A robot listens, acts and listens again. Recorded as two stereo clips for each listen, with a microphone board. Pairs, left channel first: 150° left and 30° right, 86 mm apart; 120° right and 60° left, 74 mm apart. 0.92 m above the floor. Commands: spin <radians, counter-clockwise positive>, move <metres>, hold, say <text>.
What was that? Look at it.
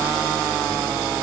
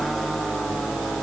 hold
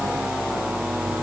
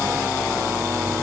hold
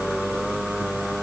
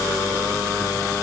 say I can't make out anything to turn to.